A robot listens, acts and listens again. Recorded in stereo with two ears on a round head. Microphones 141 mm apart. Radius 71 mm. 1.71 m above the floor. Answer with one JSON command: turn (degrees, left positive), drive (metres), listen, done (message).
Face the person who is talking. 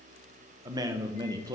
{"turn": -25}
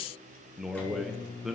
{"done": "Facing the man speaking, under 1 m away."}